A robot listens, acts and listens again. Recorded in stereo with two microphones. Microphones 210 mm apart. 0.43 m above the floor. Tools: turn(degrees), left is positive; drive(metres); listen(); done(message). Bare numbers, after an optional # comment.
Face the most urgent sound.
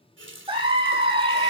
# The scream: about 25° right or 155° right.
turn(-25)
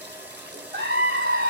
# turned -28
# So it is at 125° right.
turn(-125)
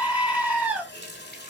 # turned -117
# The scream is now 10° right.
turn(-10)
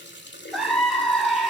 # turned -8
done("Facing the scream.")